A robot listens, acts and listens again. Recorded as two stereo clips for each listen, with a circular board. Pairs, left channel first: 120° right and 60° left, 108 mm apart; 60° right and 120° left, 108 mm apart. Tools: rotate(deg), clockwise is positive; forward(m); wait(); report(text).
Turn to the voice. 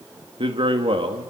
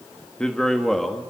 rotate(-30)
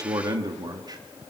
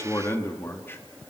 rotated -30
rotate(-10)
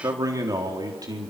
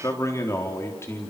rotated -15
report("Found it: a man speaking, straight ahead, 2 to 4 m away.")